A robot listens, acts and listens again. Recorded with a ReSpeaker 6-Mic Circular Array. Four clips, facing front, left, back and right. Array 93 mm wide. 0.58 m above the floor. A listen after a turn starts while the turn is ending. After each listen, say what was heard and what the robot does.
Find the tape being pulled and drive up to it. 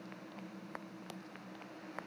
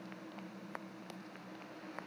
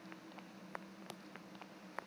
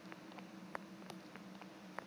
Keep listening.
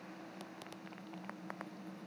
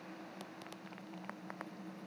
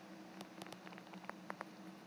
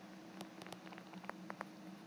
Keep listening.
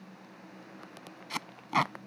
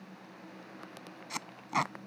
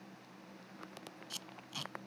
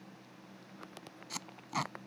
The tape being pulled: 20° left. Turn 20° left.
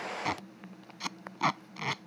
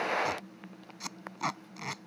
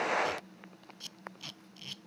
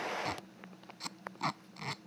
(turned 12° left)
The tape being pulled is now 10° left. Turn 10° left.
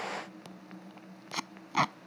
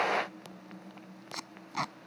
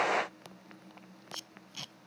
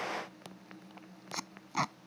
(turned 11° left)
Drive 1.0 m forward.
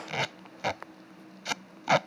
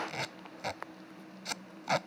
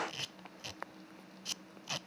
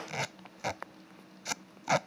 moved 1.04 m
The tape being pulled is now 10° right. Turn 10° right.
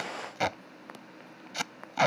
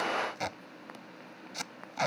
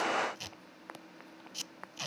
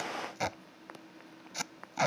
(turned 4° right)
Drive 1.0 m forward.
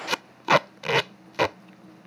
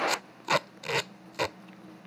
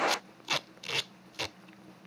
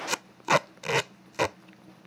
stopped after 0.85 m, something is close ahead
The tape being pulled is now 15° right. Turn 15° right.
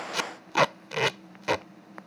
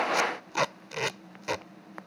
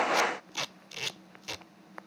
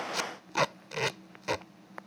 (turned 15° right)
Arrived at the tape being pulled, straight ahead.